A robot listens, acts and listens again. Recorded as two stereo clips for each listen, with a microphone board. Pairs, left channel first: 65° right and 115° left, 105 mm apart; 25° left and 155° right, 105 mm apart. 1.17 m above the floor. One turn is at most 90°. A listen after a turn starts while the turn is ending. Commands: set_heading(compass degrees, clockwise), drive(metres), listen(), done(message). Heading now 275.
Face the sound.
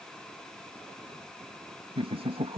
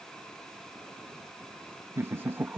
set_heading(185)
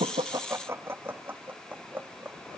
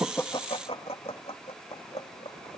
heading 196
set_heading(156)
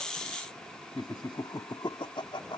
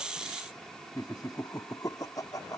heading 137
set_heading(167)
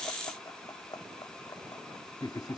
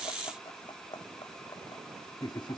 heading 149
set_heading(169)
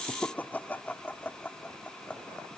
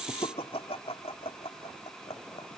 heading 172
done("Facing the laughter.")